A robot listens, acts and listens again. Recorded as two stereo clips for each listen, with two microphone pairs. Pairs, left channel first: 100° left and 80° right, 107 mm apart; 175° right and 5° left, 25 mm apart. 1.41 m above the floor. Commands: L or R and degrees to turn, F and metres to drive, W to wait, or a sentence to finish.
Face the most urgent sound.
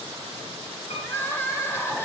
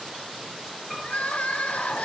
L170
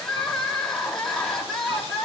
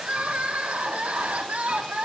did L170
L20
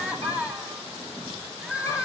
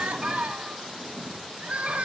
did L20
Facing the crying.